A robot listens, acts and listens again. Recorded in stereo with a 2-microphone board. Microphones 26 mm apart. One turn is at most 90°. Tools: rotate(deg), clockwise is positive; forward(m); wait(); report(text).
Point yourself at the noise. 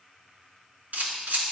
rotate(75)
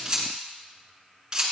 rotate(30)
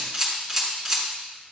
report("Found it: a camera shutter, straight ahead, 2 to 4 m away.")